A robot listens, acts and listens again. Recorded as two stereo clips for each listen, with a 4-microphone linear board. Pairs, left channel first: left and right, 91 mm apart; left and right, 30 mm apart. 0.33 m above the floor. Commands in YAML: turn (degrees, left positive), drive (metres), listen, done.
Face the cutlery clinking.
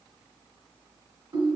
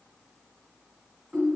listen: true
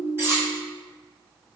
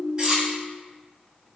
turn: -30
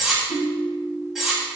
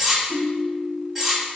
done: "Found it: cutlery clinking, straight ahead, 1 to 2 m away."